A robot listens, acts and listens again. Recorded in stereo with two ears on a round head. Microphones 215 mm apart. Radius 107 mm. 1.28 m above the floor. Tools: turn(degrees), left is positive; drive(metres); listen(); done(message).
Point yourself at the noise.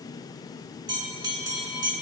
turn(degrees=-20)
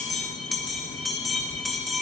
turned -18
done("Found it: a bell, straight ahead.")